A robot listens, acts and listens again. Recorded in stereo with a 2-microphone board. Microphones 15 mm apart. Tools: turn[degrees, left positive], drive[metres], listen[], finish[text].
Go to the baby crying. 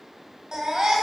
Thought: The baby crying: about 70° right or 110° right.
Action: turn[-70]
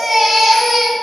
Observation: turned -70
Action: drive[1.0]
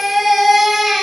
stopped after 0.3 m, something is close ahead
Thought: The baby crying is now 10° right.
Action: turn[-10]
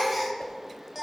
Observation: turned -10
Action: finish[Something is in my way. I am facing the baby crying but have not reached it.]